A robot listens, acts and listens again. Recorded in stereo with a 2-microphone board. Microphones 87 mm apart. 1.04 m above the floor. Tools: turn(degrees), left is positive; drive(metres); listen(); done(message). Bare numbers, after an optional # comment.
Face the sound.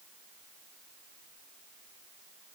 listen()
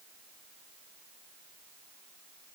listen()
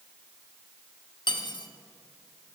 # The cutlery clinking: about 60° left or 120° left.
turn(60)
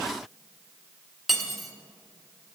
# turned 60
done("Found it: cutlery clinking, straight ahead, under 1 m away.")